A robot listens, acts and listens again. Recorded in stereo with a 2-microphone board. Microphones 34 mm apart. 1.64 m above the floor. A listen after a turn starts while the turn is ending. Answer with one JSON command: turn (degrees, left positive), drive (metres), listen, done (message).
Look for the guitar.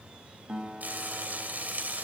{"turn": -30}
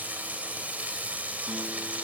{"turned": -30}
{"listen": true}
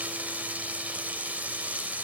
{"listen": true}
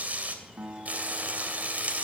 {"turn": -120}
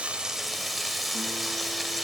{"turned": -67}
{"turn": -50}
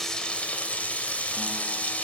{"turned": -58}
{"listen": true}
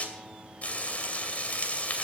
{"done": "Facing where the guitar came from. I can't hear it now."}